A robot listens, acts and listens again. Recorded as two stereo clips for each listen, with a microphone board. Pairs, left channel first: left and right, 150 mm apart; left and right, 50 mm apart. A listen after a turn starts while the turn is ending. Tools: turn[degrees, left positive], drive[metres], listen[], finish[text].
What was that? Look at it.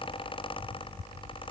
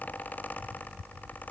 Action: listen[]
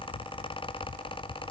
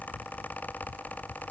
Action: listen[]
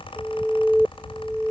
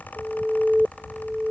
Action: turn[30]
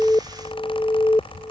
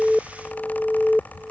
Thought: So it is at 140° left.
Action: turn[140]
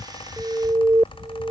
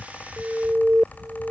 Thought: The alarm is now 20° right.
Action: turn[-20]
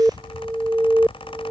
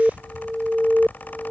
Thought: The alarm is now 10° right.
Action: turn[-10]
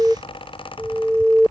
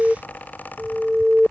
Action: finish[Facing the alarm.]